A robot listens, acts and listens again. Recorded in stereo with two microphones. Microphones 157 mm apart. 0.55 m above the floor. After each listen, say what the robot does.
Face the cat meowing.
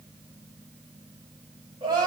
Keep listening.
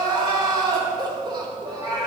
Turn 30° right.
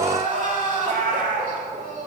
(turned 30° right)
Turn 105° right.
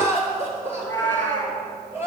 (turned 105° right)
Turn 10° left.
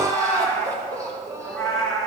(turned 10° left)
Facing the cat meowing.